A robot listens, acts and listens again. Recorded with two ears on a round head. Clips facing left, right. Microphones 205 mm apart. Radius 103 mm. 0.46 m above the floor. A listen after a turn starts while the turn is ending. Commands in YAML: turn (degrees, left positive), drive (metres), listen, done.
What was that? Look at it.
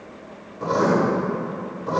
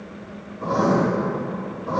turn: 50
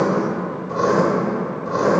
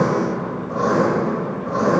turn: 65
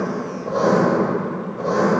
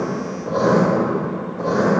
done: "Facing the writing."